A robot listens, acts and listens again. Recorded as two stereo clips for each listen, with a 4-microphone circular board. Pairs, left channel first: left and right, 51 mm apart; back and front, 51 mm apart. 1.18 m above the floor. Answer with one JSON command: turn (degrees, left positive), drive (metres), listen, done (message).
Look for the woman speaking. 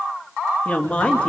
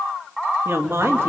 {"turn": 25}
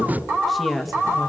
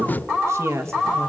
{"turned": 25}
{"done": "Facing the woman speaking."}